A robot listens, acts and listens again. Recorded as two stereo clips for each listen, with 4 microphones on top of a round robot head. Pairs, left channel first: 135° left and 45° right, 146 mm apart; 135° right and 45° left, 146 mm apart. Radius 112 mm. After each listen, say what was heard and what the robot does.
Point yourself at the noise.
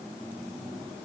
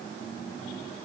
Keep listening.
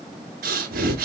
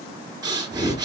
The breathing: 20° right. Turn 20° right.
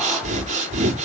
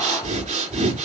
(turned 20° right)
Facing the breathing, 2 to 4 m away.